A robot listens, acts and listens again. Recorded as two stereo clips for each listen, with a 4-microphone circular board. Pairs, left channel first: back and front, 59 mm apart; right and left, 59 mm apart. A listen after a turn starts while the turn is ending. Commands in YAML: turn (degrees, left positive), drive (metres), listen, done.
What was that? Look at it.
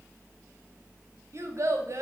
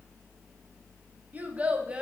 turn: 20
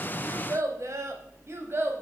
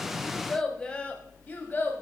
turn: -40
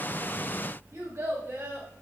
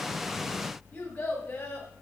turn: -35
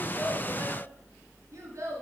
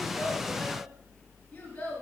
turn: -15
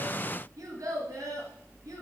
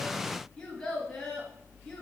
done: "Facing the child speaking."